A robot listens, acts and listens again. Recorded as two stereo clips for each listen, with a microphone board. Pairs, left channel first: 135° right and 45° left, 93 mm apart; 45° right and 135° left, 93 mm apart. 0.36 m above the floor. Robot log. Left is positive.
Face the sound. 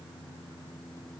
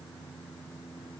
cmd idle
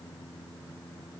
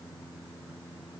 cmd idle
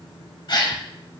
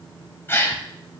note: The gasp: 105° right.
cmd yaw -105
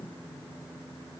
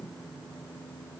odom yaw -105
end: I heard a gasp from this way, but can't make it out now.